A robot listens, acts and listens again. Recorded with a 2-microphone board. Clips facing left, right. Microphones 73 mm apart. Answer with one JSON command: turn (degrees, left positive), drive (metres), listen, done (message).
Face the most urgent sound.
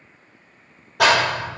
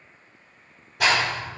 {"listen": true}
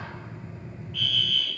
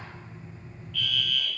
{"turn": 15}
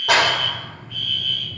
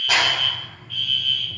{"turn": 150}
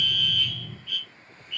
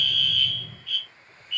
{"turn": 25}
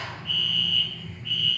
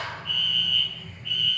{"done": "Facing the fire alarm."}